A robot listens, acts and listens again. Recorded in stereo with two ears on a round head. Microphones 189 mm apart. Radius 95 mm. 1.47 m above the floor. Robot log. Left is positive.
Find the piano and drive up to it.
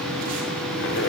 cmd idle
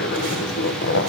cmd idle
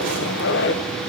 end: I can't make out a piano, only a zipper.